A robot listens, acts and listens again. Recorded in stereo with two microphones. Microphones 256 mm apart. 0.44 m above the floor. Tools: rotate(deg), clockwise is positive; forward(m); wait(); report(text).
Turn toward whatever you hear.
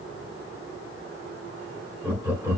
rotate(30)
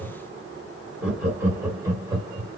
rotate(15)
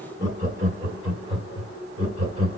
rotate(20)
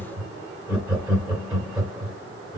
rotate(30)
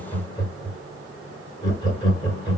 rotate(-20)
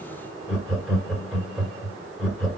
report("Found it: laughter, straight ahead, 2 to 4 m away.")